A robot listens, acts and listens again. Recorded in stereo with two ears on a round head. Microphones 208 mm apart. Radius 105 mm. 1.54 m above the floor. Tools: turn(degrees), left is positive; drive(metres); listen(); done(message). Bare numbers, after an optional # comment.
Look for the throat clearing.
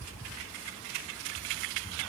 listen()
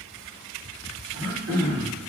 # The throat clearing: about 55° right or 125° right.
turn(-55)
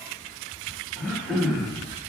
done("Facing the throat clearing, 1 to 2 m away.")